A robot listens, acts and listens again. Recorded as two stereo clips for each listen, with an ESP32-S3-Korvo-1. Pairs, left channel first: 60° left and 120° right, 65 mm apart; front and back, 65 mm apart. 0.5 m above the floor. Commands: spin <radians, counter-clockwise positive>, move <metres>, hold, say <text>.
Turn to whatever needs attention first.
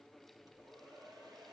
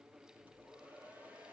hold
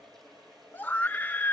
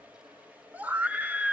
spin 2.09
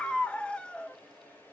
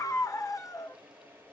spin -0.17
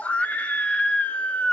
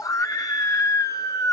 say Facing the scream, 1 to 2 m away.